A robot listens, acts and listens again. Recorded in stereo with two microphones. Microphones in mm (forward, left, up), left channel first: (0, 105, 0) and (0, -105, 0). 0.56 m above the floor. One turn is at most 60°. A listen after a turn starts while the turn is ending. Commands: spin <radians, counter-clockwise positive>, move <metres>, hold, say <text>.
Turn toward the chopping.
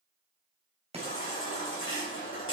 spin -0.52
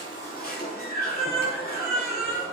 hold
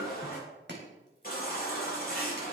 spin -1.05
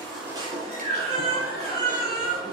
spin -1.05
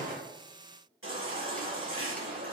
hold
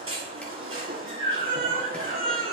say Facing where the chopping came from. I can't hear it now.